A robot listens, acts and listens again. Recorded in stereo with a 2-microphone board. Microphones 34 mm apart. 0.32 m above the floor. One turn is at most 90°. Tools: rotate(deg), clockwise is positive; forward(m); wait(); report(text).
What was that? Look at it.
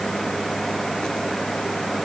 wait()
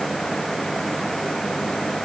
wait()
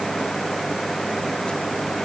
report("I can't make out anything.")